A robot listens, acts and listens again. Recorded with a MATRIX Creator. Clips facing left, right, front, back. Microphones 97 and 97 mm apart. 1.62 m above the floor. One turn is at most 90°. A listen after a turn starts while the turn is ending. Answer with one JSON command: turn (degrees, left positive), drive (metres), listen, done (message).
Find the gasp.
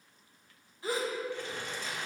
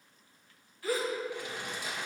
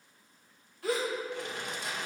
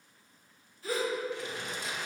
{"turn": 20}
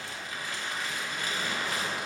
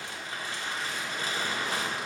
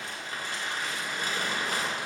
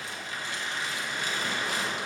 {"done": "I heard a gasp from this way, but can't make it out now."}